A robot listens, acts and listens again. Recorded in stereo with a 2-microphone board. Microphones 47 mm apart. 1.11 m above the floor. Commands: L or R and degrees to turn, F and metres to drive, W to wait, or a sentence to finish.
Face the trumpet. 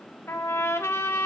L90
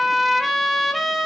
Found it: a trumpet, straight ahead.